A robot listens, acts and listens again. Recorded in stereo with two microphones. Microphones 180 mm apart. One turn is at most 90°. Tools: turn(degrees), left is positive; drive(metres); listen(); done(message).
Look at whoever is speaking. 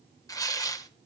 listen()
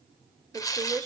turn(degrees=-20)
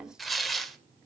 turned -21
listen()
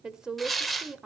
done("Facing the woman speaking, 1 to 2 m away.")